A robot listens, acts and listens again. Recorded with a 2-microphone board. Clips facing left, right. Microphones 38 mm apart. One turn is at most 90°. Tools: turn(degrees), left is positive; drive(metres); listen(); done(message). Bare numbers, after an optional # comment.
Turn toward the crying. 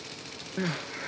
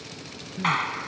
# The crying: about 55° left or 125° left.
turn(55)
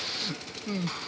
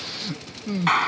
done("Facing the crying.")